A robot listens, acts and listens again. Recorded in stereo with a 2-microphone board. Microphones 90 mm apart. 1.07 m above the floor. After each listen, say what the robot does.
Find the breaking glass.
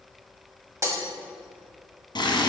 Turn 35° right.
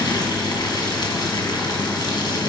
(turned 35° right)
Keep listening.
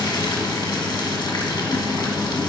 I heard breaking glass, but can't make it out now. It was about straight ahead or 110° right.